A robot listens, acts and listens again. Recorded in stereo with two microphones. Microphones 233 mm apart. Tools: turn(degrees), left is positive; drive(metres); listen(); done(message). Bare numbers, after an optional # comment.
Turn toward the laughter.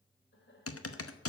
# The laughter: about 45° left or 135° left.
turn(45)
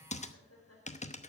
# So it is at 80° left.
turn(80)
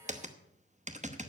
listen()
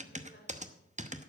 # The laughter is now 45° left.
turn(45)
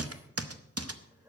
# The laughter is now 10° right.
turn(-10)
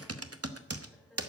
done("Found it: laughter, straight ahead.")